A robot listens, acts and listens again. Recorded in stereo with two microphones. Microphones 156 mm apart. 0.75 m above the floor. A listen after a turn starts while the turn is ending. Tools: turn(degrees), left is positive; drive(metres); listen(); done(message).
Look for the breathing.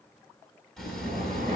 turn(degrees=-90)
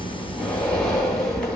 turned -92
done("Facing the breathing, 2 to 4 m away.")